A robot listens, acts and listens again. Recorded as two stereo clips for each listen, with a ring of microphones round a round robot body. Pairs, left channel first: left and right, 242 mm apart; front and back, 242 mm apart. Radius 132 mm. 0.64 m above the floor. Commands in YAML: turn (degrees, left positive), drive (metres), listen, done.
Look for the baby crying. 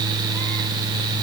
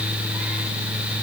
listen: true
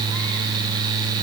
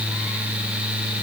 listen: true
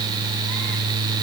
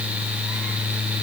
done: "I can't make out a baby crying."